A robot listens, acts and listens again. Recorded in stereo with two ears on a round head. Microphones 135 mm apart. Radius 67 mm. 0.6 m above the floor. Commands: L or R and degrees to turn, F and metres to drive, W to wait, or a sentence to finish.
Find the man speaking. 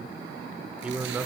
R30
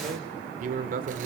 R115
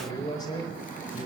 L35
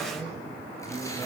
W
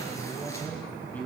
L10
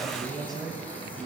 Facing the man speaking, 2 to 4 m away.